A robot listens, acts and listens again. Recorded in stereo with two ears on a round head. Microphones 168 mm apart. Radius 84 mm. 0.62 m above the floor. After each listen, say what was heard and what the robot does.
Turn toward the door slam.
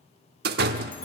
The door slam: about 60° right or 120° right. Turn 60° right.
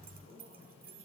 Keep listening.
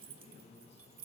I heard a door slam, but can't make it out now. It was about straight ahead or 60° right.